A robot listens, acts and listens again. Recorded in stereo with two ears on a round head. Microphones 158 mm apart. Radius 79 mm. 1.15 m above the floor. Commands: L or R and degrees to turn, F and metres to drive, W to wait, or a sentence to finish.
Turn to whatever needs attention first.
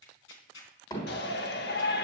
L60
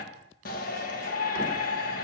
L55
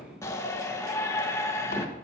L15
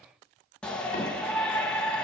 Facing the shout.